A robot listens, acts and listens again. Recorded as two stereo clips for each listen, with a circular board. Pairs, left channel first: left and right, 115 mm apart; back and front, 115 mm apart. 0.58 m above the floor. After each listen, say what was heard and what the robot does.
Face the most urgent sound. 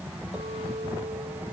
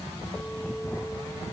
Keep listening.
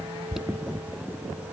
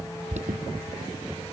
Found it: an alarm, straight ahead.